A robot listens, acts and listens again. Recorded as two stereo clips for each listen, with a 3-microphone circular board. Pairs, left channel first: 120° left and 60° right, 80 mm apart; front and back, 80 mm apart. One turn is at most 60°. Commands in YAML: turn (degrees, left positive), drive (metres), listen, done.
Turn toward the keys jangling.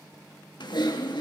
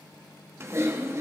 listen: true
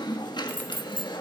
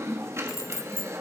turn: 55
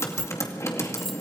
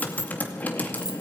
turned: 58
turn: 35
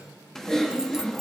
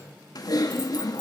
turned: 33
listen: true
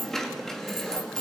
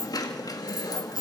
turn: 40
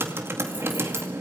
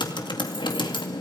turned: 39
listen: true
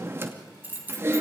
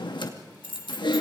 done: "Found it: keys jangling, straight ahead."